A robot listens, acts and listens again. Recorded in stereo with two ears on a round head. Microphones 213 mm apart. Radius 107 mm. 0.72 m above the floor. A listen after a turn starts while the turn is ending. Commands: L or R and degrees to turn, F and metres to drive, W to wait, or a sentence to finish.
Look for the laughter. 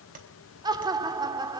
R15
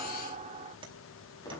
R150
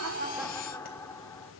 L10
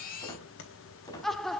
Facing the laughter, 1 to 2 m away.